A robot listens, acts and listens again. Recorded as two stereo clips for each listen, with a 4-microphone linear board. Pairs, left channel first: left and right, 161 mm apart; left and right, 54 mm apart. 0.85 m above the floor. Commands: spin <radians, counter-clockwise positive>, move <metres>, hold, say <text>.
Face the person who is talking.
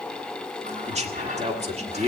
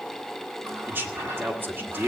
spin -0.70
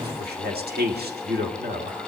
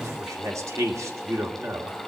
spin -1.75
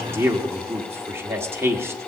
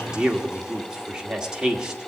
spin -0.26
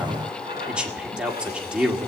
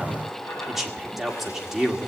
say Found it: a man speaking, straight ahead.